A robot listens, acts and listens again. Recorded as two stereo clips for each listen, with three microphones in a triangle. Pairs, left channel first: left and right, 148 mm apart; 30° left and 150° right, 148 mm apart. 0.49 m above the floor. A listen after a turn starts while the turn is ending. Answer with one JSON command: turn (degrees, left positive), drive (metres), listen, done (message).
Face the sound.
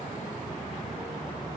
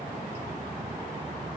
{"listen": true}
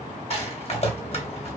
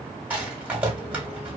{"turn": 130}
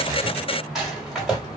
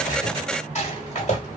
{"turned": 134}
{"done": "Facing the rattle."}